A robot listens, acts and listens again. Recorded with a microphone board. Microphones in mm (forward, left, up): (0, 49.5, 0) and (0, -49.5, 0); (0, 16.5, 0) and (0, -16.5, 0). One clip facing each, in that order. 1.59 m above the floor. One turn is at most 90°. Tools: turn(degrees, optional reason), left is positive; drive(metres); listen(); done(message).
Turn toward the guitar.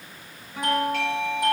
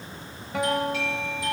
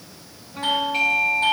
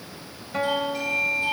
turn(degrees=-90)
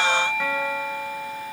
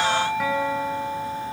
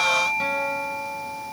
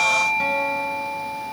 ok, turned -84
listen()
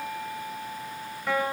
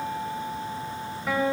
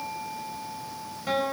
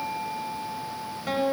done("Facing the guitar, over 4 m away.")